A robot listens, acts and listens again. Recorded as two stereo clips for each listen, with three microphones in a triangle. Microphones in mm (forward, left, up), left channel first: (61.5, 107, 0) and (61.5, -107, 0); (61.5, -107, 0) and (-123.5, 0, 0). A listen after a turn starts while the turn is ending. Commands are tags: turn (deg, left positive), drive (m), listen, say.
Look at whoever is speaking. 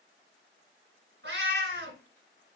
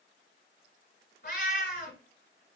<listen/>
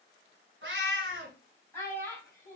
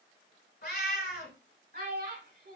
<turn deg="165"/>
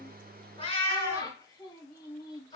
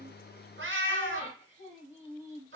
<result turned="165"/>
<turn deg="25"/>
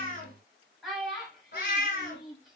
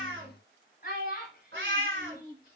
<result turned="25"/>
<say>Facing the child speaking, 1 to 2 m away.</say>